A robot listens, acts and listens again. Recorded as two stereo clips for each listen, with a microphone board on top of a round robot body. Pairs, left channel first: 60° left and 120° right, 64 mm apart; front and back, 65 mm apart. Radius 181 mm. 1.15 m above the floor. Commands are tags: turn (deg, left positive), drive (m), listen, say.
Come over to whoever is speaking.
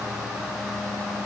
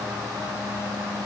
<listen/>
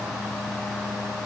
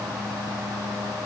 <listen/>
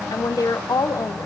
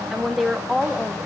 <turn deg="95"/>
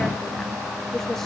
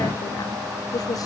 <turn deg="-25"/>
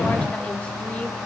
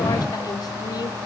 <listen/>
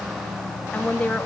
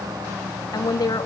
<turn deg="-15"/>
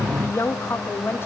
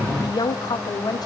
<drive m="1.0"/>
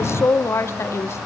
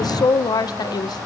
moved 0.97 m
<turn deg="10"/>
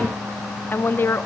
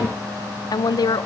<drive m="1.0"/>
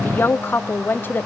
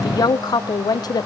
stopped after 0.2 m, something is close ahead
<say>I am next to the woman speaking.</say>